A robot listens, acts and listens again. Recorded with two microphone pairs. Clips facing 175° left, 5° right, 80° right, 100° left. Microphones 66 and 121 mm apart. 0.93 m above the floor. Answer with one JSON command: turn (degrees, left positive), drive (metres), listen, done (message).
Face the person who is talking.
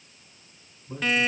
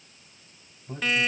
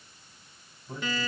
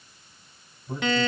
{"turn": 20}
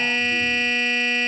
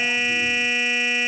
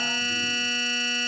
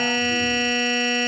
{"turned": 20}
{"listen": true}
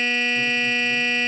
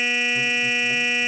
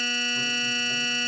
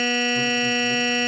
{"listen": true}
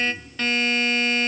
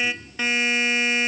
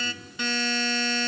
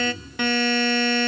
{"turn": 10}
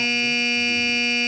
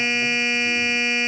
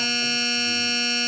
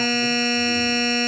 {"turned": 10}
{"listen": true}
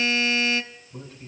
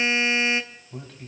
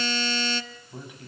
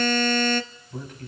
{"done": "Found it: a man speaking, straight ahead, over 4 m away."}